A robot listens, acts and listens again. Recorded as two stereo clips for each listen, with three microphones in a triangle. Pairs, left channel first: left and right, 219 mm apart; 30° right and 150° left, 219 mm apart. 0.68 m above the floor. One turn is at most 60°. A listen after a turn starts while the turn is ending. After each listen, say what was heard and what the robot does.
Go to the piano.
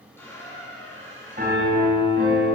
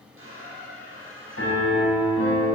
The piano: 40° right. Turn 40° right.
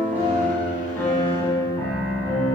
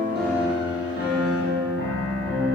The piano is now 10° left. Turn 10° left.
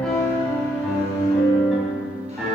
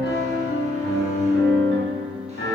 Drive 1.0 m forward.
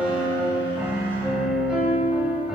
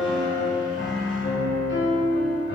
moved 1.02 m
Drive 1.0 m forward.
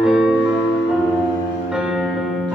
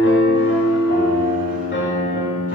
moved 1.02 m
Drive 1.0 m forward.
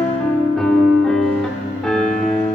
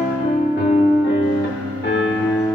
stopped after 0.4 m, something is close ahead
Arrived at the piano, straight ahead.